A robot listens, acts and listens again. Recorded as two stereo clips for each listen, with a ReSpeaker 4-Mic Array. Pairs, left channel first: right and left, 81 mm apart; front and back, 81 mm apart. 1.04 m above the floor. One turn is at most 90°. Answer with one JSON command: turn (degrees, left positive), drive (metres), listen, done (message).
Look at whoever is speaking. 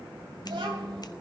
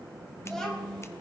{"turn": 80}
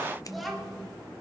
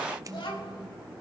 {"done": "Facing the child speaking, 2 to 4 m away."}